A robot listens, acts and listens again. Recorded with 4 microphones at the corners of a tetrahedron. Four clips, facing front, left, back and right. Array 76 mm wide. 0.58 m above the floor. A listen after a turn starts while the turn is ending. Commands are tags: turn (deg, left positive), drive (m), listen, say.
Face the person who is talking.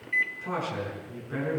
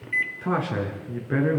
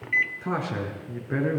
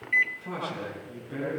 <turn deg="115"/>
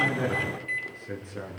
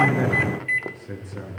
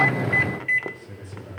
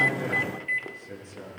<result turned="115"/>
<turn deg="35"/>
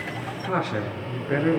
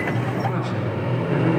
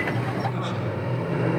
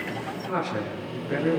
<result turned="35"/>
<say>Facing the man speaking, over 4 m away.</say>